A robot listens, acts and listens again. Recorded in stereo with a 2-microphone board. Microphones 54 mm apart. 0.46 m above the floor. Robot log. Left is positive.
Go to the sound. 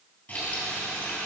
note: The frying: about 20° left or 160° left.
cmd yaw +20
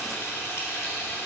note: So it is at 135° left.
cmd yaw +135
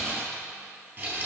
note: The frying is now 30° right.
cmd yaw -30
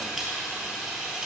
cmd fwd 1.0
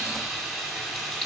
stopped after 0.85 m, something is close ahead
end: Blocked. The frying is further on, straight ahead.